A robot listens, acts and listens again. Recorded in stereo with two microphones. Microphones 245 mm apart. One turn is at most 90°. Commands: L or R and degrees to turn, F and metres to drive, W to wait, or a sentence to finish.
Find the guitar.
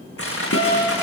L70
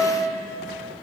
Facing the guitar.